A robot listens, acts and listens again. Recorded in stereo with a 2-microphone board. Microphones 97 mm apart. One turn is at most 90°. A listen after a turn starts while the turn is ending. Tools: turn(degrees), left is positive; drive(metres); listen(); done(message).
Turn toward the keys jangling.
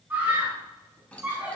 turn(degrees=30)
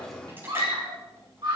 listen()
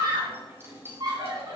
turn(degrees=-25)
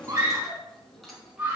done("Facing the keys jangling, 2 to 4 m away.")